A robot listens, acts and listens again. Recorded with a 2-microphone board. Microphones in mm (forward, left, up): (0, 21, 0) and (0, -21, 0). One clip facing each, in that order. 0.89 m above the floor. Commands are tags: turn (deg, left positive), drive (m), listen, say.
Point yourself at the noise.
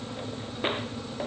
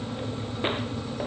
<listen/>
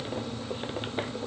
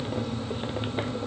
<listen/>
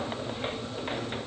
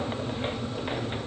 <say>I can't make out anything.</say>